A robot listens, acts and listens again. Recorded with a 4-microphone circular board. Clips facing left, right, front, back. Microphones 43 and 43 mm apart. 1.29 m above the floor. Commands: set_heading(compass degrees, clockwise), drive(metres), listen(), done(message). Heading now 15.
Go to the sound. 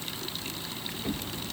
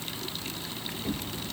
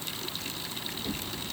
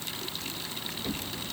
set_heading(255)
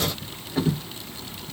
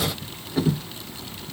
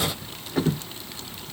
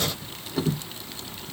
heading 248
drive(1.0)
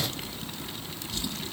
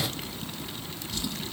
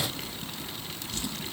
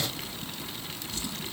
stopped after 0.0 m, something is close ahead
done("Something is in my way. I am facing the drawer but have not reached it.")